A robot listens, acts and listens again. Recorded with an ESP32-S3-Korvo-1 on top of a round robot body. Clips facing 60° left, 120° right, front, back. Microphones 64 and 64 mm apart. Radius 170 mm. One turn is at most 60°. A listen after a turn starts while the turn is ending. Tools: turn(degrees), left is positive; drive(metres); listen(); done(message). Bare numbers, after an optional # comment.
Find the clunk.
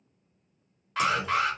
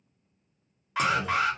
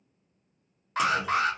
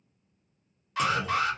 # The clunk: 85° right.
turn(-60)
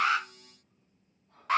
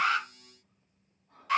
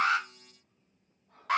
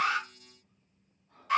# Nothing new. It was at 25° right.
turn(-25)
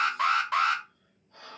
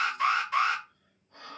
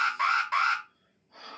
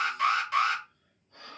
done("I heard a clunk from this way, but can't make it out now.")